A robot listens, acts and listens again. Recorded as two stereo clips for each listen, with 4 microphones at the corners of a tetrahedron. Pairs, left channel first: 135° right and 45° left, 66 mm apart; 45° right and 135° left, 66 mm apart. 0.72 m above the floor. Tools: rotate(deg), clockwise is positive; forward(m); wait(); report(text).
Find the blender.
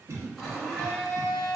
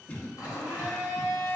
rotate(50)
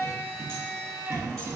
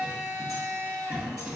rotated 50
report("Facing the blender, 1 to 2 m away.")